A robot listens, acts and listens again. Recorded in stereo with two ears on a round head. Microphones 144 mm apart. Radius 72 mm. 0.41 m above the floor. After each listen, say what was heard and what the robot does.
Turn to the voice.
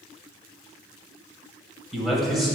Turn 30° left.
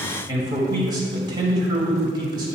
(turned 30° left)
So it is at 30° right. Turn 30° right.
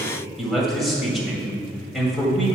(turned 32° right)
Found it: a man speaking, straight ahead.